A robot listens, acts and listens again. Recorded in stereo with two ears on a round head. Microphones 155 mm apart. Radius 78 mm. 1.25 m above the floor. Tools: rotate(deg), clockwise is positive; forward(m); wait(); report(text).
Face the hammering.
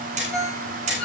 rotate(45)
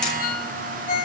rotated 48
wait()
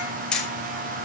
report("Facing the hammering.")